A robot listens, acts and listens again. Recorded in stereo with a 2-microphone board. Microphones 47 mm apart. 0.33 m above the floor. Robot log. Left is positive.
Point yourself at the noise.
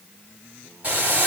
note: The boiling: about 35° right or 145° right.
cmd yaw -35
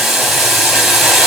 end: Found it: boiling, straight ahead, 2 to 4 m away.